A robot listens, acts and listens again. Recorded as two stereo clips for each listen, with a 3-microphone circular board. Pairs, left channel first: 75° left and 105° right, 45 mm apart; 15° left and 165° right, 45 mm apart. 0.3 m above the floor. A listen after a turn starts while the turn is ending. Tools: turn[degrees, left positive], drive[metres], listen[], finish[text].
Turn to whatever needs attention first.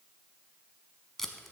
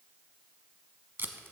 Action: listen[]
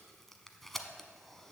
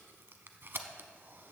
Action: listen[]
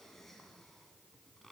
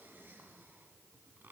Action: finish[I can't make out anything urgent, only tape being pulled.]